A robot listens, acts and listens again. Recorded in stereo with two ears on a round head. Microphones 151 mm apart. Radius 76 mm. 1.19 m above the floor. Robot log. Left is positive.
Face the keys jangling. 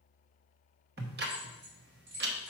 cmd yaw -90
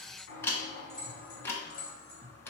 note: So it is at 35° left.
cmd yaw +35
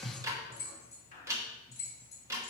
note: The keys jangling is now 15° left.
cmd yaw +15
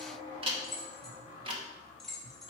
end: Found it: keys jangling, straight ahead, 2 to 4 m away.